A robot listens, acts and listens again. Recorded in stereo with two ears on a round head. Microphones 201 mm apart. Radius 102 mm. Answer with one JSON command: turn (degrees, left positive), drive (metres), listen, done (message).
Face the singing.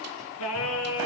{"turn": 70}
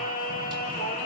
{"turn": 40}
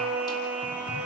{"done": "Found it: singing, straight ahead."}